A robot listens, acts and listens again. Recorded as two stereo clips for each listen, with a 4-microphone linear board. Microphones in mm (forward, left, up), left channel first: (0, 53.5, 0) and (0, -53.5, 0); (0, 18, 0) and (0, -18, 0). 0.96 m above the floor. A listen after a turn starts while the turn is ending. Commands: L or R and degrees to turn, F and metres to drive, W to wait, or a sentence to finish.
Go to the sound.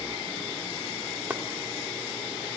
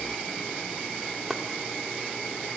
R15
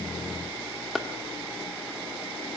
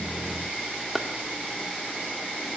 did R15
F1.0
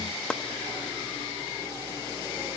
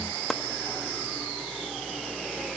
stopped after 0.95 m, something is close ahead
L10
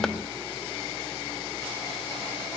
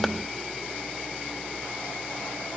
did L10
W
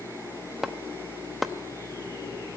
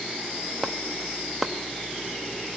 Arrived at the chopping, straight ahead.